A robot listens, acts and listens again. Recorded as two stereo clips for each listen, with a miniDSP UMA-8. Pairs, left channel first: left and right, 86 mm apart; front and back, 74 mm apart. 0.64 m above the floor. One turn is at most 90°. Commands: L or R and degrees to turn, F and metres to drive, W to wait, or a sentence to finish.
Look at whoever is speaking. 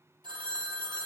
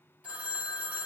W
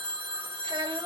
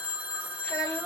R70
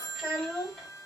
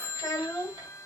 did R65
Facing the child speaking.